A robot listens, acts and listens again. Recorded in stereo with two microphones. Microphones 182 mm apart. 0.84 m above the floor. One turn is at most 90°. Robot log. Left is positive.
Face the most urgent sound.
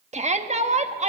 note: The shout: about 40° right or 140° right.
cmd yaw -40
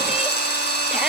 cmd idle
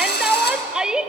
end: Facing the shout.